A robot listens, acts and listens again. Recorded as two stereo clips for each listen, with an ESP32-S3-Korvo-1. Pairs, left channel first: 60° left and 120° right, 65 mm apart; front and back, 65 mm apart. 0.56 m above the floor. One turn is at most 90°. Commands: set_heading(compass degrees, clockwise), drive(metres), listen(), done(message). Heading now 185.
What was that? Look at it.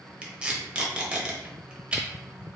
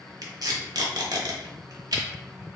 set_heading(95)
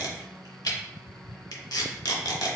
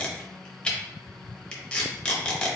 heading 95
set_heading(20)
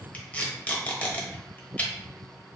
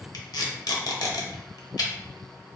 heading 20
set_heading(30)
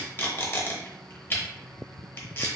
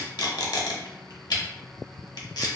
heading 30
done("Found it: tape being pulled, straight ahead, under 1 m away.")